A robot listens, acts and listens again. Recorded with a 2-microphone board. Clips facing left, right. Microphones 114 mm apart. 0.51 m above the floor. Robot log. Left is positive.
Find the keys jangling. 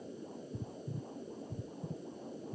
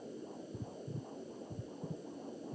cmd idle
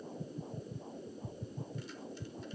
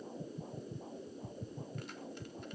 cmd idle
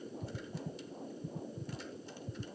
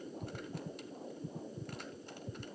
end: I can't make out keys jangling to turn to.